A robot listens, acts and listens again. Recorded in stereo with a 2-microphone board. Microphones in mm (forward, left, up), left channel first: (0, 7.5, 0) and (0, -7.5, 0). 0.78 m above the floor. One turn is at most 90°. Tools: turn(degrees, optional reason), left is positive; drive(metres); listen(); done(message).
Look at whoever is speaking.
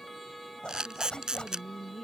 turn(degrees=15, reason="The woman speaking: about 15° left or 165° left.")
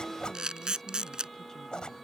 listen()
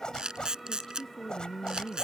turn(degrees=90, reason="So it is at 150° left.")
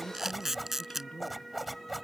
turn(degrees=80, reason="The woman speaking is now 80° left.")
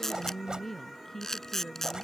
turn(degrees=25, reason="The woman speaking is now 25° left.")
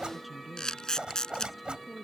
done("Found it: a woman speaking, straight ahead.")